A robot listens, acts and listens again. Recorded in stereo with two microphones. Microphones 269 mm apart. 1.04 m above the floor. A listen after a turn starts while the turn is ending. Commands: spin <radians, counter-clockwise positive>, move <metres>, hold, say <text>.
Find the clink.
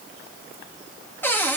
hold
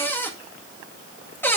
hold
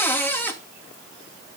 say I can't make out a clink to turn to.